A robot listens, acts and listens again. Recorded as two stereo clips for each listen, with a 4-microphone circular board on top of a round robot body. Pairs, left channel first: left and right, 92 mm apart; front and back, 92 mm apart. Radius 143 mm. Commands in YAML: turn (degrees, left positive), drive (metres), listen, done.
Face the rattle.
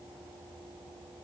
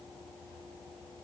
listen: true
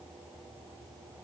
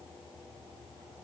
listen: true
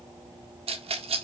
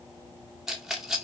turn: -95
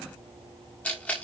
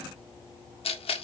turn: 15
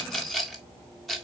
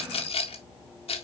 done: "Found it: a rattle, straight ahead."